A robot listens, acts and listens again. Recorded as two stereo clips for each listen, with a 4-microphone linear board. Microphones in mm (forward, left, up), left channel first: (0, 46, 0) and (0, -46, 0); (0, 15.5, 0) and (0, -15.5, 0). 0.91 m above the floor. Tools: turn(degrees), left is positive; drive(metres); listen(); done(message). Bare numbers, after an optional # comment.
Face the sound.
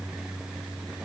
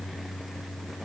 listen()
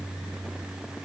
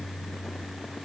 listen()
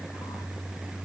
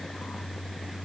done("I can't make out anything.")